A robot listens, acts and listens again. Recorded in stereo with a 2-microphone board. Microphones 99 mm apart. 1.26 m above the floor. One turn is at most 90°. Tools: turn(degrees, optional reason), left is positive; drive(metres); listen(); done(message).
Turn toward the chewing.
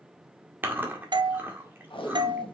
turn(degrees=-20, reason="The chewing: about 20° right or 160° right.")
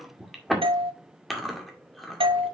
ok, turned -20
done("Facing the chewing, 1 to 2 m away.")